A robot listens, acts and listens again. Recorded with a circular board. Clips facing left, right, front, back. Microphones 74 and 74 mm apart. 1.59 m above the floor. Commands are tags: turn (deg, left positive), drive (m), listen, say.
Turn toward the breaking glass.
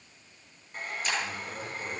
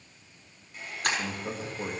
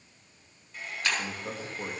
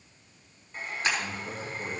<turn deg="-110"/>
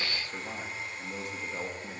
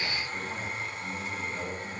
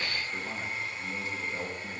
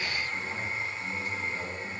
<say>I heard breaking glass from this way, but can't make it out now.</say>